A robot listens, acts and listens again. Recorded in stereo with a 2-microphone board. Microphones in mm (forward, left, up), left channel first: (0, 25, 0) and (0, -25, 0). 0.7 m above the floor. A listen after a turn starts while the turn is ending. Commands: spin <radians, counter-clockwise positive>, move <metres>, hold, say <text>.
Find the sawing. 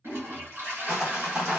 spin -0.26
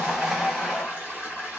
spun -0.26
say Found it: sawing, straight ahead, 1 to 2 m away.